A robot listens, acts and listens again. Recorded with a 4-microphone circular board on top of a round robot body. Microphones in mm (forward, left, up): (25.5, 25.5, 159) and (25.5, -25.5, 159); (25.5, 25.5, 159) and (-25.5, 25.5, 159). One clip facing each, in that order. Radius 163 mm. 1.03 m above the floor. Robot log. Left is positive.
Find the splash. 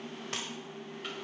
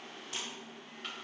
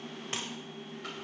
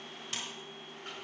note: The splash: 60° left.
cmd yaw +60
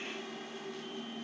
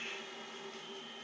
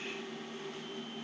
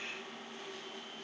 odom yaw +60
end: Facing where the splash came from. I can't hear it now.